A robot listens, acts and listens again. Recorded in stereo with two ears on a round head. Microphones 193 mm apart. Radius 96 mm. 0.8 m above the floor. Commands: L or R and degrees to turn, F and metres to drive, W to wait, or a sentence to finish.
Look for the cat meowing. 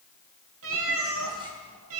R75
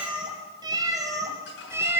R10
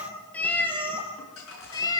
L20
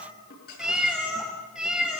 Found it: a cat meowing, straight ahead.